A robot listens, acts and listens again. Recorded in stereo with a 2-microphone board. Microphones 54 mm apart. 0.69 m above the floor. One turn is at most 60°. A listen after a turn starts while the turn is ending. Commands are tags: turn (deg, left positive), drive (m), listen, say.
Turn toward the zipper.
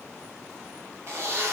<turn deg="-55"/>
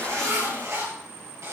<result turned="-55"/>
<turn deg="-60"/>
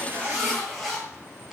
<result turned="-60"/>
<say>Found it: a zipper, straight ahead.</say>